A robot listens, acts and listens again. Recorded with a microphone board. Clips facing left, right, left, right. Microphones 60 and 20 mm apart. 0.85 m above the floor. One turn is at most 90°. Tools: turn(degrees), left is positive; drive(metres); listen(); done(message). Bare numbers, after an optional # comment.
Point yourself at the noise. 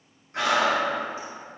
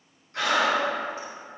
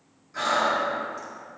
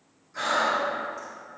# The breathing: about 25° left or 155° left.
turn(25)
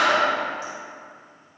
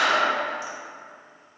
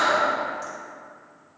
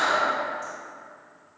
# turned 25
# So it is at 130° left.
turn(90)
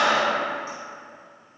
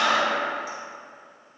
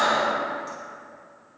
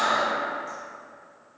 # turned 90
# The breathing is now 40° left.
turn(40)
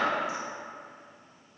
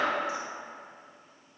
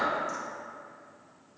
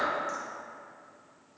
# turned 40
done("Facing the breathing.")